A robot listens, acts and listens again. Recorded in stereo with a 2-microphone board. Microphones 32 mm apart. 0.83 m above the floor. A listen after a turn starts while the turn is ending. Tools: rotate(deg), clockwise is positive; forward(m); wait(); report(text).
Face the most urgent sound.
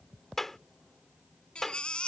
rotate(-35)
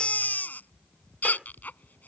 rotate(-110)
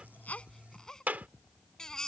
rotate(-15)
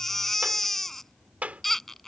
report("Found it: a baby crying, straight ahead.")